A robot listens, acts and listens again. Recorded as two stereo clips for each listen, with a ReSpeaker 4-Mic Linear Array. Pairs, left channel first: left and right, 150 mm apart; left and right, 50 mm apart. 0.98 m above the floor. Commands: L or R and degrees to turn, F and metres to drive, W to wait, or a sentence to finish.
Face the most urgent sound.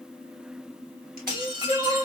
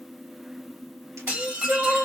R60
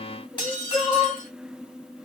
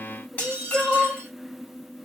Facing the crying, 1 to 2 m away.